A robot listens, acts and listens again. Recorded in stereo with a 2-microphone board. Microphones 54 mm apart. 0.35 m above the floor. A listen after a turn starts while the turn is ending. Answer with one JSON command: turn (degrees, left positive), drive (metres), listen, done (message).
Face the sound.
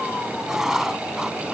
{"turn": -30}
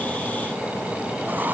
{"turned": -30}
{"turn": -140}
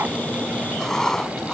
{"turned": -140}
{"turn": 10}
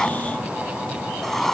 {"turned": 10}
{"done": "Facing the writing."}